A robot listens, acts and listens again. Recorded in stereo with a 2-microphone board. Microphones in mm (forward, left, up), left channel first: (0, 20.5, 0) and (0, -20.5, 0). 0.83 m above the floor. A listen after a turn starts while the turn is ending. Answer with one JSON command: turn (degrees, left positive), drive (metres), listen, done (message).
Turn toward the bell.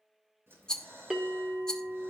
{"turn": -25}
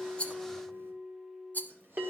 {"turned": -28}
{"turn": -130}
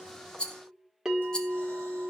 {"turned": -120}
{"turn": -10}
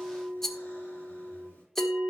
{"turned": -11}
{"done": "Facing the bell, 1 to 2 m away."}